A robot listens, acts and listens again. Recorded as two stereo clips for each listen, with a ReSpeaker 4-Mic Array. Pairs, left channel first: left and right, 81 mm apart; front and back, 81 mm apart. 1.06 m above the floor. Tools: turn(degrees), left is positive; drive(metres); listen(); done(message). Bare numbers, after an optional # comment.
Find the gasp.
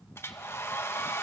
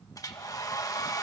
listen()
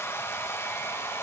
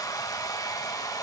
listen()
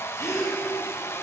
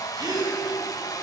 # The gasp: 145° left.
turn(145)
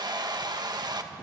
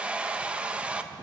done("I heard a gasp from this way, but can't make it out now.")